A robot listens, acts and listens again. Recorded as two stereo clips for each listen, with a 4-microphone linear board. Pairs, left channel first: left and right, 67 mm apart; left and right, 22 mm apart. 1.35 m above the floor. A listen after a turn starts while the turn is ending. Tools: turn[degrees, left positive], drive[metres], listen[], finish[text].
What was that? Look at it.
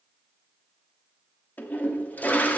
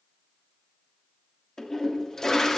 Thought: The toilet flushing: about 25° left or 155° left.
Action: turn[25]
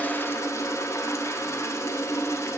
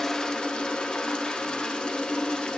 Thought: So it is at 125° left.
Action: turn[125]
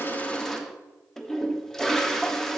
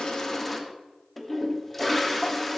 Action: finish[Found it: a toilet flushing, straight ahead.]